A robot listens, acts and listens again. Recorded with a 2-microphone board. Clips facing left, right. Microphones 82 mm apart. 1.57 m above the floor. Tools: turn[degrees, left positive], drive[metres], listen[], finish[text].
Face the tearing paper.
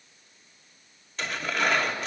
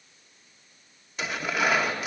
Action: turn[-30]
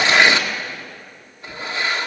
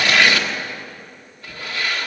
Thought: So it is at 20° left.
Action: turn[20]
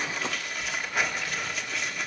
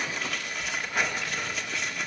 Action: finish[Found it: tearing paper, straight ahead.]